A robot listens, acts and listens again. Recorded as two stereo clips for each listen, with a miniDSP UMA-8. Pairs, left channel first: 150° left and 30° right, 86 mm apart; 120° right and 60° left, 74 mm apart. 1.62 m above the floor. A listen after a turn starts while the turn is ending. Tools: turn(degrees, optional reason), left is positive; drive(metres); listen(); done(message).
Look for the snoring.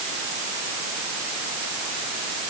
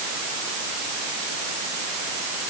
listen()
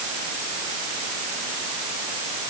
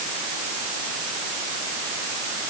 listen()
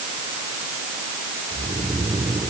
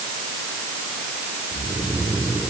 turn(degrees=-10, reason="The snoring: 10° right.")
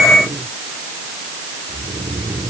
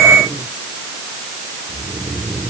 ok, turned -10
done("Found it: snoring, straight ahead.")